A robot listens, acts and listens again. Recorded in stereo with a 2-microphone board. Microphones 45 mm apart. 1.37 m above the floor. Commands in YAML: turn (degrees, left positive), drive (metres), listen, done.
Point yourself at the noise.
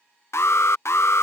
turn: 70
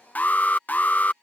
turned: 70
turn: 35
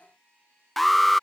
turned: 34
done: "Found it: an alarm, straight ahead."